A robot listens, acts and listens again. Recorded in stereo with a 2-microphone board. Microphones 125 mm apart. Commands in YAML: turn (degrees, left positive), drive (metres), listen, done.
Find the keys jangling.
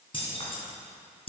turn: 50
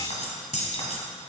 turn: 60
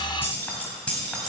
done: "Facing the keys jangling, 1 to 2 m away."